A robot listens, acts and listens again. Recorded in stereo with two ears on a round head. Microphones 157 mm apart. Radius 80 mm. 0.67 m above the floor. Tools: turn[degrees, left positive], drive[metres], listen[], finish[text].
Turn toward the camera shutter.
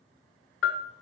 Action: listen[]
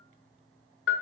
Action: listen[]
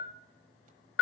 Action: finish[I can't make out a camera shutter to turn to.]